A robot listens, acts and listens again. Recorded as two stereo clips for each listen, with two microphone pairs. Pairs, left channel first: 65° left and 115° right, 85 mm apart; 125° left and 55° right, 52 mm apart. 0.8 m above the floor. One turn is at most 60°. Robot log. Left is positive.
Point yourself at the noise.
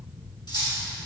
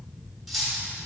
note: The cutlery clinking: 35° left.
cmd yaw +35
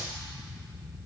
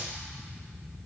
cmd idle
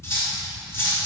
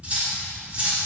note: The cutlery clinking is now 10° left.
cmd yaw +10
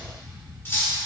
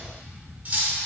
end: Found it: cutlery clinking, straight ahead, 1 to 2 m away.